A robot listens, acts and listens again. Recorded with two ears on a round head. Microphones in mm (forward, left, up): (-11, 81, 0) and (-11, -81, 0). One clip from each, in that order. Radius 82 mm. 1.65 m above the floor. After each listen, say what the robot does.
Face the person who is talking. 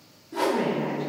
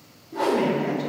Turn 60° right.
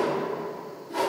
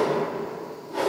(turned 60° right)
Keep listening.
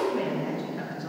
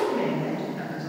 Facing the woman speaking.